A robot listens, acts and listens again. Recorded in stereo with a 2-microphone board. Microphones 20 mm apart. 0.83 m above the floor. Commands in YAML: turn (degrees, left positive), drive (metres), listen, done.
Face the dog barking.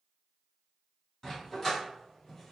turn: 15
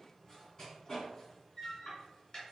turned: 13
turn: 30
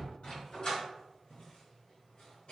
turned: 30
turn: 120
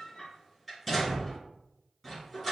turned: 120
done: "Facing the dog barking."